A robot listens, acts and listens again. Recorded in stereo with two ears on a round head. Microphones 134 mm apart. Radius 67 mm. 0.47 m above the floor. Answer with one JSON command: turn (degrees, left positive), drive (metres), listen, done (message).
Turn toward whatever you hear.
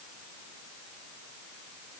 {"listen": true}
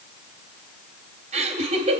{"turn": -50}
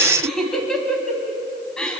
{"done": "Facing the laughter, 2 to 4 m away."}